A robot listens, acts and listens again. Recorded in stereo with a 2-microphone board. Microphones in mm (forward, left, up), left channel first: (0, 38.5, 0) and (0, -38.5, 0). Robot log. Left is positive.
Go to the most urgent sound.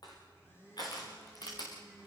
cmd idle
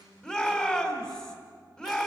cmd yaw +30
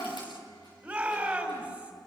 note: So it is at 15° right.
cmd yaw -15
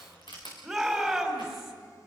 cmd fwd 1.0
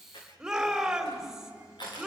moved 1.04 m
note: The shout is now 10° right.
cmd yaw -10
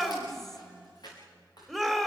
cmd fwd 1.0
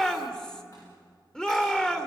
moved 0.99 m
note: The shout is now 15° left.
cmd yaw +15
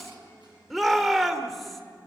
cmd fwd 1.0
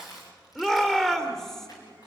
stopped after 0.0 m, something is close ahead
note: The shout is now 10° left.
cmd yaw +10
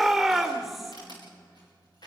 end: I am next to the shout.